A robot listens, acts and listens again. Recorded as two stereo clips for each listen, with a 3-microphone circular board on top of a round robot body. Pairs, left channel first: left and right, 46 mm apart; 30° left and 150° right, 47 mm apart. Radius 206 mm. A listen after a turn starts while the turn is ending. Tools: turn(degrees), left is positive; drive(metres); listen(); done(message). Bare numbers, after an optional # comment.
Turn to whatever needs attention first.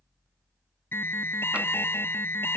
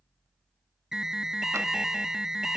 # The alarm: 130° left.
turn(130)
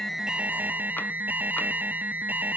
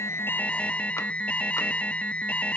# The alarm is now 35° right.
turn(-35)
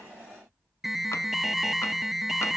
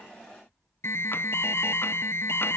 done("Found it: an alarm, straight ahead.")